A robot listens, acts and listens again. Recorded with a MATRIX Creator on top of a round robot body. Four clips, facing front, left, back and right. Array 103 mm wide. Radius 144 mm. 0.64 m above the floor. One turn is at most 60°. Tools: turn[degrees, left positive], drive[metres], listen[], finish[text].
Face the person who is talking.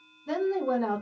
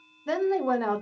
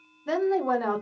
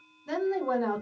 Thought: The woman speaking: 130° left.
Action: turn[60]
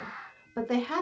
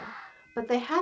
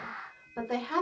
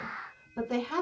Thought: The woman speaking is now 70° left.
Action: turn[60]
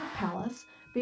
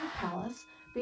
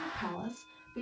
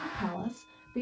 Action: finish[Facing the woman speaking, 1 to 2 m away.]